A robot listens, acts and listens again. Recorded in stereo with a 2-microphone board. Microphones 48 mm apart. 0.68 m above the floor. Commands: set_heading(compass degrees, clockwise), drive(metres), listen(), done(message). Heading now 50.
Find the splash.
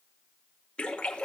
set_heading(30)
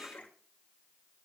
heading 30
set_heading(255)
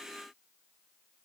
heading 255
done("Facing where the splash came from. I can't hear it now.")